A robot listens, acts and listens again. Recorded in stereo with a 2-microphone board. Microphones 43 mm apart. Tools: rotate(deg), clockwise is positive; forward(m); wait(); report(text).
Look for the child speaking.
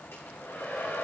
wait()
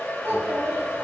rotate(90)
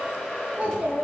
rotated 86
rotate(30)
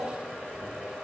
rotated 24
report("Found it: a child speaking, straight ahead, 2 to 4 m away.")